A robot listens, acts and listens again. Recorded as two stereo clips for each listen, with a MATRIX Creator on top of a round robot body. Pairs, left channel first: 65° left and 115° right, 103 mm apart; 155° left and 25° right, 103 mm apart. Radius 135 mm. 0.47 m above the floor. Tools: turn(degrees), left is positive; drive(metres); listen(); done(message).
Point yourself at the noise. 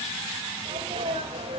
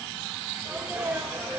turn(degrees=-100)
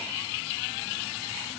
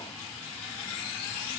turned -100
done("Facing where the sneeze came from. I can't hear it now.")